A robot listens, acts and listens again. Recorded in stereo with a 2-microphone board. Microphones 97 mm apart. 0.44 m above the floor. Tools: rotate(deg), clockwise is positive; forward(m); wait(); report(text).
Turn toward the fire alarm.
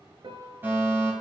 rotate(20)
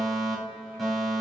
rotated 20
report("Facing the fire alarm, over 4 m away.")